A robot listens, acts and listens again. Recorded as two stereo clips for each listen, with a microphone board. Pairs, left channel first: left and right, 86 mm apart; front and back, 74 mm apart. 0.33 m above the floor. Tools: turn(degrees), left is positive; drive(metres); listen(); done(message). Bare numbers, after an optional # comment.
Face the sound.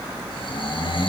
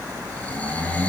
# The snoring: 70° left.
turn(70)
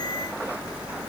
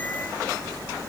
listen()
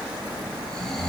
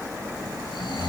done("Found it: snoring, straight ahead, over 4 m away.")